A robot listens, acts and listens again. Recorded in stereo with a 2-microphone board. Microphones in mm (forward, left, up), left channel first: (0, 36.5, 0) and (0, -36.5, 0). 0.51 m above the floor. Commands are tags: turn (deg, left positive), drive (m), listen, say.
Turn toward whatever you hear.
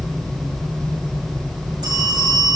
<turn deg="-90"/>
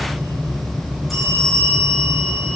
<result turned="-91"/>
<say>Facing the bell.</say>